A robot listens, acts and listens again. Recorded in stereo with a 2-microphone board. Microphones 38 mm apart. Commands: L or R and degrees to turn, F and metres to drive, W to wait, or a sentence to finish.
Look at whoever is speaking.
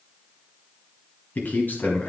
L55
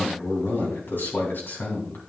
L65
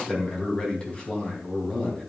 L25
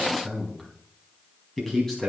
L10
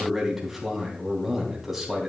Found it: a man speaking, straight ahead.